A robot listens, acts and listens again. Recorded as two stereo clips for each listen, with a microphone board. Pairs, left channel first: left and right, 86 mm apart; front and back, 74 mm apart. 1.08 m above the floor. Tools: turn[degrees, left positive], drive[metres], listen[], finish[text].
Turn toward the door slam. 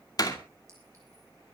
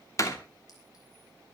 Thought: The door slam: 45° left.
Action: turn[45]
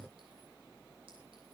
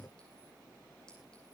Action: finish[I heard a door slam from this way, but can't make it out now.]